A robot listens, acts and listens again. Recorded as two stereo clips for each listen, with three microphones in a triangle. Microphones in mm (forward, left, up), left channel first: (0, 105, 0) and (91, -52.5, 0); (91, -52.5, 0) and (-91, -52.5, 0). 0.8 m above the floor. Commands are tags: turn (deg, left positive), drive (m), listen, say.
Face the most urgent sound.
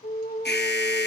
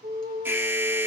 <turn deg="105"/>
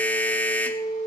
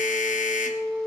<turn deg="40"/>
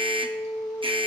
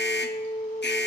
<say>Facing the alarm.</say>